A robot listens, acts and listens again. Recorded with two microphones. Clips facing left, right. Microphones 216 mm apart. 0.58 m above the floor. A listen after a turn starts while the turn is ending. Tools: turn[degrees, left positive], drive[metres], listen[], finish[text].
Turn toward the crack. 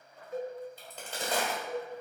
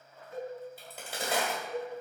Action: turn[-30]
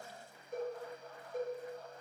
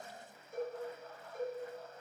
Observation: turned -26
Action: listen[]
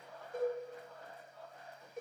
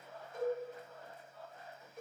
Action: finish[I heard a crack, but can't make it out now. It was about 20° left or 145° right.]